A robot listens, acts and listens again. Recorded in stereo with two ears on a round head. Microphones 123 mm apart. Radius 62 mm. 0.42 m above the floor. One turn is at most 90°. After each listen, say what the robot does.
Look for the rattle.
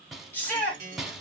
Turn 30° left.
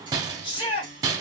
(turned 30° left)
Turn 25° right.
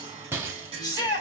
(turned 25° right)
Turn 15° right.
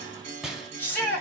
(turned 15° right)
Found it: a rattle, straight ahead.